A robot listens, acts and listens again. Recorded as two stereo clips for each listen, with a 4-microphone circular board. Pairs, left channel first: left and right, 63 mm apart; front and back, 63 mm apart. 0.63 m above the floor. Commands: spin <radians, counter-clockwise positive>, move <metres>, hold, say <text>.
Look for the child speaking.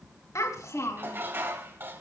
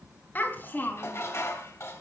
spin 0.96
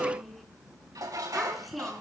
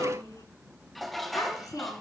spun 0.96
say Facing the child speaking.